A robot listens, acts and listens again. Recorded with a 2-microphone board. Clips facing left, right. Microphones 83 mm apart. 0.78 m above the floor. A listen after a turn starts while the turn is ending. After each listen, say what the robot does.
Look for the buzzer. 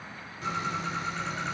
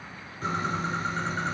Keep listening.
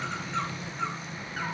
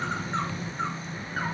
Keep listening.
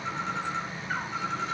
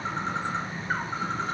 I can't make out a buzzer to turn to.